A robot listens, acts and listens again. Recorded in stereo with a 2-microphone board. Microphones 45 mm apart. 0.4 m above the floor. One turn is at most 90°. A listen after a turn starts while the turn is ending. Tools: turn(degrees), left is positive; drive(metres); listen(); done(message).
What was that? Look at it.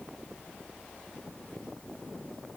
listen()
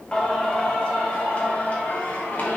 turn(degrees=50)
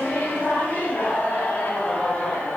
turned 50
turn(degrees=45)
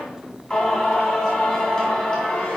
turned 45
turn(degrees=20)
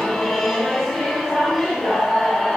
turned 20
done("Facing the singing, 2 to 4 m away.")